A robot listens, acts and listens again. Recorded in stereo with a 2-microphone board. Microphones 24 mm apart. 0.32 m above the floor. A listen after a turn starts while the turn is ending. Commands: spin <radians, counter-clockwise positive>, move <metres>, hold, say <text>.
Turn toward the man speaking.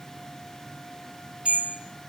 hold
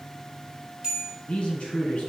spin 1.22
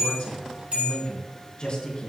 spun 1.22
spin 0.70
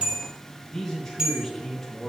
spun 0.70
say Facing the man speaking, over 4 m away.